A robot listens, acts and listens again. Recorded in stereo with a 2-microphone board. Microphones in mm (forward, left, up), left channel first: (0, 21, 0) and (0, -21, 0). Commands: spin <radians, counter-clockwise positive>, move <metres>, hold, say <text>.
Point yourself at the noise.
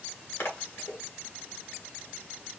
spin 1.31
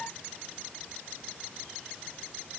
hold
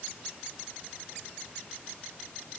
say I heard a splash, but can't make it out now. It was about straight ahead or 30° left.